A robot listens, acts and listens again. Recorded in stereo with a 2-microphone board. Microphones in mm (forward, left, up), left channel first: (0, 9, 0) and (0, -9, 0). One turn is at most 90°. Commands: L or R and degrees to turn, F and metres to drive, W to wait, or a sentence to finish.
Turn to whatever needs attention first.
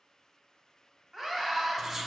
R15
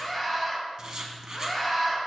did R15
Found it: a scream, straight ahead.